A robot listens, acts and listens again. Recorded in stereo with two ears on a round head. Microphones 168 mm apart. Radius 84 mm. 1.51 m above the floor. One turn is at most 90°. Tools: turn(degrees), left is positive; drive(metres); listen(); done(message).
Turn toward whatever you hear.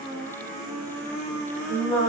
turn(degrees=-35)
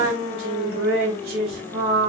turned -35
turn(degrees=-90)
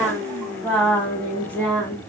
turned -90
turn(degrees=10)
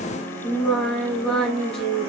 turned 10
done("Facing the singing, over 4 m away.")